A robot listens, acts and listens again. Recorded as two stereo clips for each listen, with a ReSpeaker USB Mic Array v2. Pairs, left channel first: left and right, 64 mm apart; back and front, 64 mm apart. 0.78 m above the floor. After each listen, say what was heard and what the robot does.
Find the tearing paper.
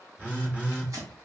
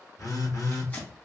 The tearing paper: 120° right. Turn 120° right.
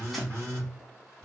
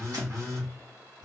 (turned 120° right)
Keep listening.
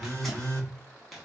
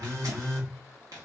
Facing the tearing paper.